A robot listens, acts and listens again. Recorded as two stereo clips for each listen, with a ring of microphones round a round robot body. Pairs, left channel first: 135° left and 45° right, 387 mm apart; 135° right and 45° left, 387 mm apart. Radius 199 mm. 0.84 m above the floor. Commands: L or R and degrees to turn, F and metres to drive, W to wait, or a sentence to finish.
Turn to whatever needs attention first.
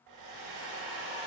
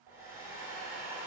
W
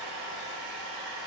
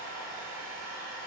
W
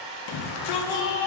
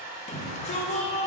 L155
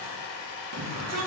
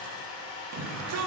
Facing the shout.